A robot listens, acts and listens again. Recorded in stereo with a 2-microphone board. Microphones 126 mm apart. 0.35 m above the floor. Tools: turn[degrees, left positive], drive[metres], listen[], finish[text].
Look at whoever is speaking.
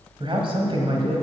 Thought: The man speaking: about 45° right or 135° right.
Action: turn[-45]
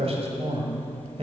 Thought: So it is at 80° right.
Action: turn[-80]
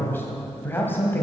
Thought: The man speaking is now 20° left.
Action: turn[20]
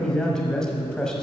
Action: finish[Facing the man speaking.]